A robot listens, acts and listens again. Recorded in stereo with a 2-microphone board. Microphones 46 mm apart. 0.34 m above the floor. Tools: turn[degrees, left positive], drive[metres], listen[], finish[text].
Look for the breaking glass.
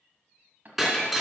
Action: turn[-30]
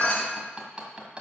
Thought: So it is at 25° left.
Action: turn[25]
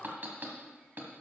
Action: finish[I heard breaking glass from this way, but can't make it out now.]